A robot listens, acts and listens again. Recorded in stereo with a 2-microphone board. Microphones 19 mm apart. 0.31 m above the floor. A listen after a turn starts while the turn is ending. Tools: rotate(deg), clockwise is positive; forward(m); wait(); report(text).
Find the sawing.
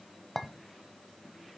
wait()
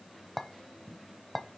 wait()
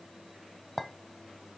report("I can't make out sawing to turn to.")